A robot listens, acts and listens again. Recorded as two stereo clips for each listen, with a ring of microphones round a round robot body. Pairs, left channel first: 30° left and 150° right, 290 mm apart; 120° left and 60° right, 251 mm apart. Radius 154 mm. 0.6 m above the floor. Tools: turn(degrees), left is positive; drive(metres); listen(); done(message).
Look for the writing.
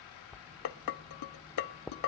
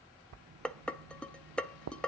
turn(degrees=-60)
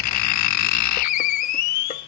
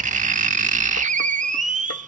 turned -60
done("Found it: writing, straight ahead, under 1 m away.")